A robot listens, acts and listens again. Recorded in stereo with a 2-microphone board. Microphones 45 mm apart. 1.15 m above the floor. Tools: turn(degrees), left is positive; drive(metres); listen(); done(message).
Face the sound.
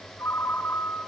turn(degrees=65)
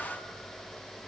listen()
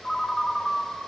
done("Facing the ringtone, 2 to 4 m away.")